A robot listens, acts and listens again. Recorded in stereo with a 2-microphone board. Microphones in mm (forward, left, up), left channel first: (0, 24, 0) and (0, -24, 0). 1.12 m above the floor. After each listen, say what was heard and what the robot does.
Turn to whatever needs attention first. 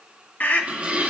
The scream: about 35° left or 145° left. Turn 35° left.
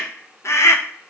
So it is at 110° left. Turn 110° left.
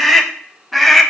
Found it: a scream, straight ahead.